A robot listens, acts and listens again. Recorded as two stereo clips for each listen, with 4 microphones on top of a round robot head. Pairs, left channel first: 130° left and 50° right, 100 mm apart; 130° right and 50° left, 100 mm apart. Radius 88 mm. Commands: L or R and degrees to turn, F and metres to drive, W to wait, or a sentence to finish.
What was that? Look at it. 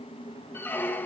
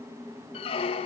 R160
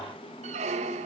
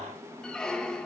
R45
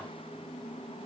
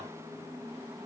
W
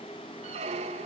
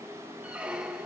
R30
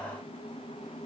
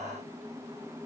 W
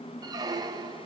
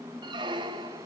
Facing the squeak, 1 to 2 m away.